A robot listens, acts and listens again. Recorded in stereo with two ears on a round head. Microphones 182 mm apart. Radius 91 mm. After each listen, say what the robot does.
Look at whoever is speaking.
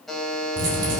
Turn 70° right.
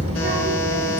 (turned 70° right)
Turn 30° right.
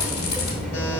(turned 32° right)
Facing the child speaking, 1 to 2 m away.